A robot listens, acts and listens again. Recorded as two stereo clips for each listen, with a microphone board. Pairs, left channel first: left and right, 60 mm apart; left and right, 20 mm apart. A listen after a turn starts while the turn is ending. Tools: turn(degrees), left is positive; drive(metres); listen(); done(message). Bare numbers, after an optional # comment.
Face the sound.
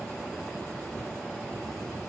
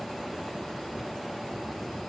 listen()
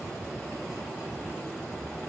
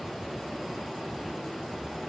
listen()
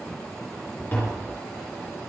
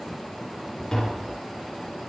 # The tapping: about 35° left or 145° left.
turn(35)
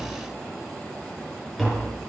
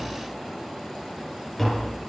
done("Facing the tapping.")